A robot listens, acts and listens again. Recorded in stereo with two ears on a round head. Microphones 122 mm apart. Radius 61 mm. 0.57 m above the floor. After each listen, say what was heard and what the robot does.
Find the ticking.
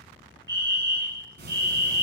Turn 90° right.
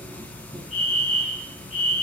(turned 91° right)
So it is at 10° left. Turn 10° left.
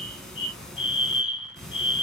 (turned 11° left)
Facing the ticking, 1 to 2 m away.